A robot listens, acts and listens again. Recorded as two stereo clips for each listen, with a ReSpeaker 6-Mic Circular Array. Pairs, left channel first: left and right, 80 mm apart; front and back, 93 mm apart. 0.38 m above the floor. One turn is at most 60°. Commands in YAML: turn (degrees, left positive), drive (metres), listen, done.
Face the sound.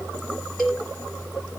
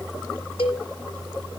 done: "Found it: a cowbell, straight ahead, over 4 m away."